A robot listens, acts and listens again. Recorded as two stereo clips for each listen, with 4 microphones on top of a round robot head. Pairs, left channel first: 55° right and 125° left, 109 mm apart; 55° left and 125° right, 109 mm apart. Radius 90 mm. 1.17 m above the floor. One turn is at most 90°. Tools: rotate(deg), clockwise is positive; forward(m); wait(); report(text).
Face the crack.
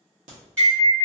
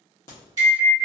rotate(-90)
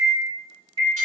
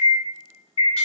rotate(-30)
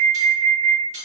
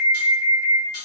report("Facing where the crack came from. I can't hear it now.")